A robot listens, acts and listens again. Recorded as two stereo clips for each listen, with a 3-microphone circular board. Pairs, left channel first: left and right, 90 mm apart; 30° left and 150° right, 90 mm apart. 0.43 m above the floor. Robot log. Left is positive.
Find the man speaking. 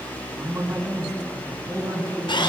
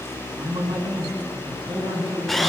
note: The man speaking: 140° right.
cmd yaw -140
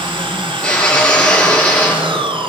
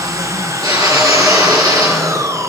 cmd idle
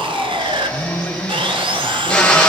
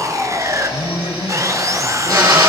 note: The man speaking is now 15° left.
cmd yaw +15
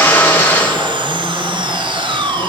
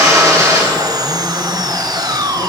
cmd idle
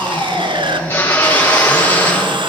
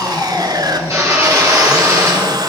cmd idle
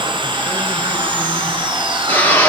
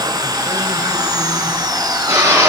end: Facing where the man speaking came from. I can't hear it now.